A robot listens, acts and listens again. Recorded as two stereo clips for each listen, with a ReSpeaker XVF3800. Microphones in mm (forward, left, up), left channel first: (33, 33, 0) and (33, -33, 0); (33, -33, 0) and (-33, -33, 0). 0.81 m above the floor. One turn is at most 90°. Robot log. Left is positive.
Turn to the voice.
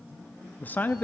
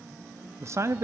note: The man speaking: 145° left.
cmd yaw +90
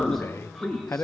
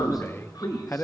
note: The man speaking is now 45° left.
cmd yaw +45
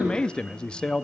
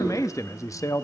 note: The man speaking is now 15° left.
cmd yaw +15
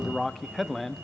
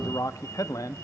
end: Found it: a man speaking, straight ahead.